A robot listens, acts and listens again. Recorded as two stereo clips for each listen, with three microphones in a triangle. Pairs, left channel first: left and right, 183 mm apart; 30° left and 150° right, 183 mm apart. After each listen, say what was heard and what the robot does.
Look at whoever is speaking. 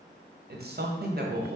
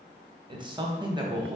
The man speaking: 85° right. Turn 85° right.
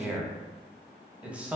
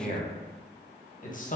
The man speaking is now 10° right. Turn 10° right.
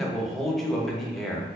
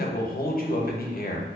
Found it: a man speaking, straight ahead, under 1 m away.